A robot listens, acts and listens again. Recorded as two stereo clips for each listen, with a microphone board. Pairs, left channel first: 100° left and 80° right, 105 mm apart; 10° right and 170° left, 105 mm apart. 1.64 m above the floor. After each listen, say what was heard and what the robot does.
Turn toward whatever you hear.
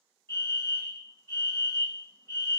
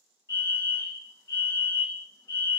The fire alarm: 40° left. Turn 40° left.
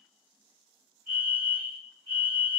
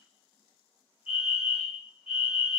Facing the fire alarm.